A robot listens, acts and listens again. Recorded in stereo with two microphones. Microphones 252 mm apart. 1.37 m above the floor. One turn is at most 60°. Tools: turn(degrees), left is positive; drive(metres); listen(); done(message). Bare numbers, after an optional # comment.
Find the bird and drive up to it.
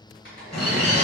turn(30)
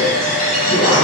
# So it is at 145° left.
turn(60)
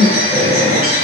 # The bird is now 95° left.
turn(60)
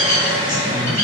# The bird is now 40° left.
turn(40)
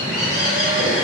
drive(1.0)
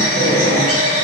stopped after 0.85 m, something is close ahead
# The bird is now 15° left.
turn(15)
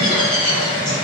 done("I am next to the bird.")